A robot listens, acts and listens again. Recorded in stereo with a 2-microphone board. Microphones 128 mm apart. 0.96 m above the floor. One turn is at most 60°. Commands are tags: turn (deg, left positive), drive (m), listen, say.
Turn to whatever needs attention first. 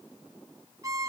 <listen/>
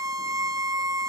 <listen/>
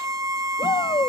<turn deg="35"/>
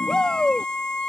<say>Facing the shout.</say>